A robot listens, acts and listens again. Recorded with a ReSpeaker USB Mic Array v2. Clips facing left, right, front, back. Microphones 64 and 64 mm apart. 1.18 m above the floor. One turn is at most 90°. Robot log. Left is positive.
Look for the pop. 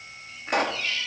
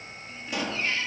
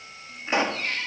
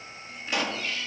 note: The pop: 60° left.
cmd yaw +60
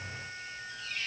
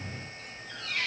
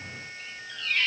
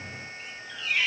end: I heard a pop from this way, but can't make it out now.